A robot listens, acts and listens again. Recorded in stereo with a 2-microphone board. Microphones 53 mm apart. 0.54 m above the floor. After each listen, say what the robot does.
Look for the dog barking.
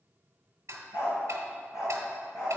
Turn 90° left.
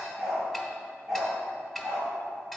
Turn 15° right.
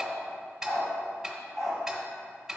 Found it: a dog barking, straight ahead.